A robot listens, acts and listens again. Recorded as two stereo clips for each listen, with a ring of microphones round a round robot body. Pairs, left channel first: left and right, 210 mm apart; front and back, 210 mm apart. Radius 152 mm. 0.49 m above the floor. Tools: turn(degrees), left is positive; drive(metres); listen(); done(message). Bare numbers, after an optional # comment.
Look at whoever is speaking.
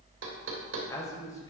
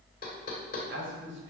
# The man speaking: 165° left.
turn(165)
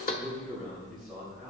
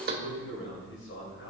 done("Found it: a man speaking, straight ahead, 2 to 4 m away.")